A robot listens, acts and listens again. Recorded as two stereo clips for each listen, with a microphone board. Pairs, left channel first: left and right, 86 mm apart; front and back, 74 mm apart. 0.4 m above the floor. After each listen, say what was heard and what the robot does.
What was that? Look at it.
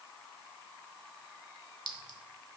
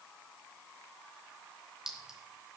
The clink: 100° left. Turn 100° left.
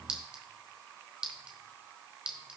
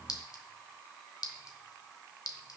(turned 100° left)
The clink is now 15° right. Turn 15° right.
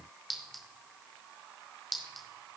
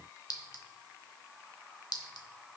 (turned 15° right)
Found it: a clink, straight ahead, 1 to 2 m away.